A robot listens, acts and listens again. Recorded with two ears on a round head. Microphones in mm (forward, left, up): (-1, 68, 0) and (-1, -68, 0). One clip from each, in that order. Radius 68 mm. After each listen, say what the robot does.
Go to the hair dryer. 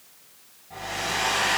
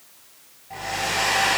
Turn 40° right.
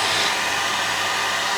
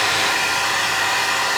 Turn 100° right.
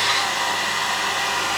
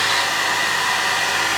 Turn 50° right.
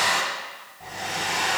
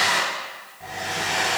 Drive 1.0 m forward.
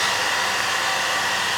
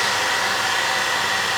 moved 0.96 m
Drive 1.0 m forward.
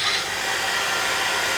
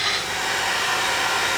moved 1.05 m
Turn 10° left.
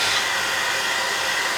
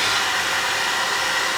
Drive 1.0 m forward.
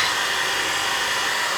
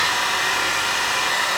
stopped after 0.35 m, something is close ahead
I am next to the hair dryer.